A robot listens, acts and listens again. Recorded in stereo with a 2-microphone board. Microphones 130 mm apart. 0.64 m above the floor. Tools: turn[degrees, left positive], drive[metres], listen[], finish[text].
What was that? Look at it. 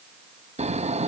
Thought: The snoring: about 55° right or 125° right.
Action: turn[-55]
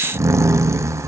Thought: So it is at 25° right.
Action: turn[-25]
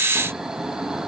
Action: finish[Found it: snoring, straight ahead.]